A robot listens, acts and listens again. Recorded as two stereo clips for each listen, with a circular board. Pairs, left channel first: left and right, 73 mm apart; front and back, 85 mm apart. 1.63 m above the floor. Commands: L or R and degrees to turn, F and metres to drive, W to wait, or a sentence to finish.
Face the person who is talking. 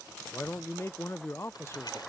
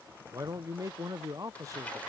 L135
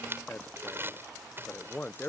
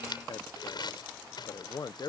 L30
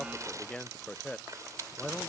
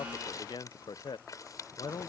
L15
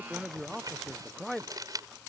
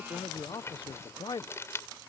Found it: a man speaking, straight ahead.